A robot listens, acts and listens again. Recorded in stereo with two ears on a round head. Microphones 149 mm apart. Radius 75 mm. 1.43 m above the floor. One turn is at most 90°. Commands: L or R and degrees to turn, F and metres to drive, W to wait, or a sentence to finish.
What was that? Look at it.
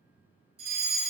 R40
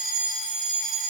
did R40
Found it: a fire alarm, straight ahead, 2 to 4 m away.